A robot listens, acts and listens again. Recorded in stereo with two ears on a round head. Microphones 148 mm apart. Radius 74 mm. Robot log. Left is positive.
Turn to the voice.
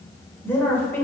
cmd yaw +30
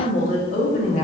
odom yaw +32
note: So it is at 135° left.
cmd yaw +135
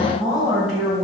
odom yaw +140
end: Found it: a woman speaking, straight ahead.